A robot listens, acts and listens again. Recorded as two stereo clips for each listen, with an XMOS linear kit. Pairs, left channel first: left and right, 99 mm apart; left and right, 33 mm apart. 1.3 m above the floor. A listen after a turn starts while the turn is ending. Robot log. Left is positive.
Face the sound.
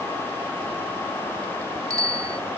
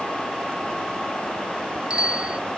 note: The bicycle bell: about 35° right or 145° right.
cmd yaw -35
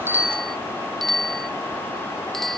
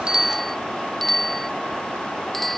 end: Facing the bicycle bell.